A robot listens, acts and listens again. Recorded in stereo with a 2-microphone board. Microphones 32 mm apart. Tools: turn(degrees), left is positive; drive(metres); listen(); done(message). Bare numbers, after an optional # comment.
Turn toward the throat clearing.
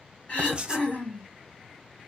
# The throat clearing: about 45° left or 135° left.
turn(45)
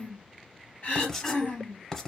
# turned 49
# So it is at 75° left.
turn(75)
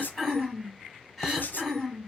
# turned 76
done("Facing the throat clearing, 2 to 4 m away.")